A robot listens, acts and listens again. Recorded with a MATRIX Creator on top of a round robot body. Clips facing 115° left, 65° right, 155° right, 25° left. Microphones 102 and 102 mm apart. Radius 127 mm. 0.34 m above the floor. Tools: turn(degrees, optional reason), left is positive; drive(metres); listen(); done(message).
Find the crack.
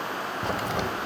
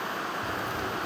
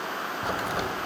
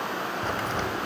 turn(degrees=125, reason="The crack: 125° left.")
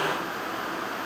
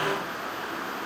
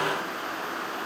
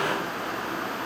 done("I heard a crack from this way, but can't make it out now.")